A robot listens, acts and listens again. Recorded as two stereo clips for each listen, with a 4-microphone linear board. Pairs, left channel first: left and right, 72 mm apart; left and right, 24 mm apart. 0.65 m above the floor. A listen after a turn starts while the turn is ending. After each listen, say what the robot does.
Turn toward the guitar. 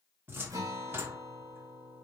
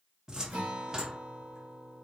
Turn 50° right.
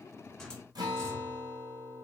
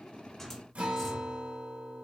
Turn 75° right.
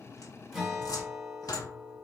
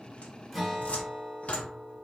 Found it: a guitar, straight ahead, 2 to 4 m away.